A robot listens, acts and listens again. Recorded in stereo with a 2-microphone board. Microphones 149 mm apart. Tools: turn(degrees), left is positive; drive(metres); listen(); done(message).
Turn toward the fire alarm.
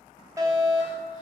turn(degrees=-25)
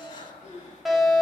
done("Found it: a fire alarm, straight ahead, 2 to 4 m away.")